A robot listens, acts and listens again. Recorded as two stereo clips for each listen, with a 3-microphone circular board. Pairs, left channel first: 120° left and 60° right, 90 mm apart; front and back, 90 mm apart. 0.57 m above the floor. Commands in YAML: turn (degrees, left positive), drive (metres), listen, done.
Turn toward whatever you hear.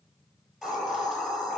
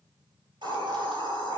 turn: -145
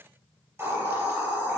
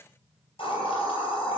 done: "Found it: a hiss, straight ahead."